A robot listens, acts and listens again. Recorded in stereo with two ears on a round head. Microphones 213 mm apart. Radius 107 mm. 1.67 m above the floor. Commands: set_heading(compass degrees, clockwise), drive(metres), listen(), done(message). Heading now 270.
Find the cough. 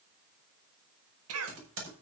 set_heading(335)
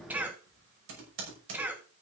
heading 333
set_heading(343)
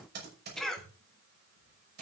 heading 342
done("Found it: a cough, straight ahead, 2 to 4 m away.")